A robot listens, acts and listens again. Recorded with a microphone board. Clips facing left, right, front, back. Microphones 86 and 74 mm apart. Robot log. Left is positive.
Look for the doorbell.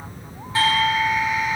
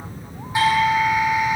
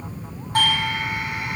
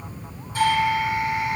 note: The doorbell: 15° right.
cmd yaw -15
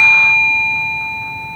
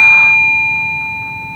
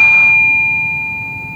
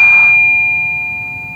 end: Found it: a doorbell, straight ahead.